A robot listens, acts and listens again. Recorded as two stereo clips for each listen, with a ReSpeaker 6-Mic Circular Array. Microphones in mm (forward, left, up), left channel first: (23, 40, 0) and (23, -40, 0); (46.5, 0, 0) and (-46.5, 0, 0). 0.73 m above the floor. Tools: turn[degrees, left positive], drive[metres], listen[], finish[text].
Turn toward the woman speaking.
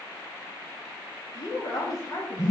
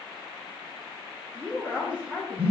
Thought: The woman speaking: 105° left.
Action: turn[105]
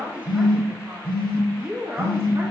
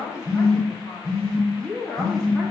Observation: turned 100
Thought: The woman speaking is now 75° right.
Action: turn[-75]
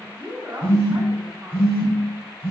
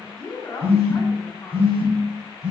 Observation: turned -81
Thought: The woman speaking is now 30° right.
Action: turn[-30]
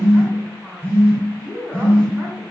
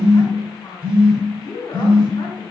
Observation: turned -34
Action: finish[Facing the woman speaking.]